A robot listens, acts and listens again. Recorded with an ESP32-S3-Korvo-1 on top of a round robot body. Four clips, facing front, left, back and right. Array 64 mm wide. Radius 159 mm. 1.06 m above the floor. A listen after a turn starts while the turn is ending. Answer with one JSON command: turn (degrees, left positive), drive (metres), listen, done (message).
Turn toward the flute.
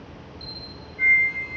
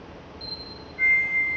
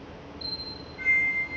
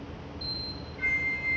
{"turn": 95}
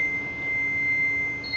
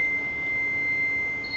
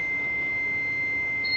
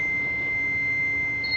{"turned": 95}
{"turn": 35}
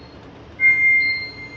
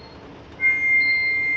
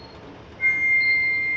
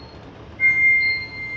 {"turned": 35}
{"done": "Found it: a flute, straight ahead, 1 to 2 m away."}